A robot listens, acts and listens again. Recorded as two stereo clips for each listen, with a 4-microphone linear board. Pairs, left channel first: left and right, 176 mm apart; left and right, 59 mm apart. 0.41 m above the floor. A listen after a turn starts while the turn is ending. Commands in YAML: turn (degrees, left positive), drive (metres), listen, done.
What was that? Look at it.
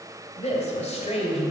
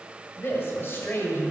turn: 40
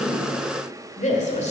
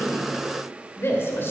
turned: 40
turn: 40
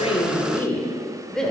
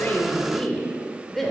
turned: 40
done: "Found it: a woman speaking, straight ahead."